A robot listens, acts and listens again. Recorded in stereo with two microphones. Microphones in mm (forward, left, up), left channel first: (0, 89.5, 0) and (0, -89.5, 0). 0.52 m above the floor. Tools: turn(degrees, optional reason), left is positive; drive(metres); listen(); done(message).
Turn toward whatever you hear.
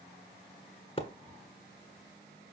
turn(degrees=35, reason="The splash: about 35° left or 145° left.")
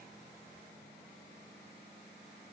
listen()
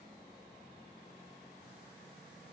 done("I heard a splash, but can't make it out now. It was about straight ahead or 110° left.")